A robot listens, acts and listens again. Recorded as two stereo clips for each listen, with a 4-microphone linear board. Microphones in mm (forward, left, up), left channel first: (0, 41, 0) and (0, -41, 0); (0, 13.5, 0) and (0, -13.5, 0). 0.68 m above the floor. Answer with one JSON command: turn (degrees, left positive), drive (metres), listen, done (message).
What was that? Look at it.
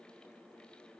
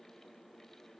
{"listen": true}
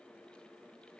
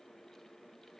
{"listen": true}
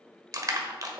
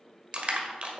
{"turn": -45}
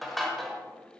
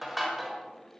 {"done": "Found it: crushing, straight ahead."}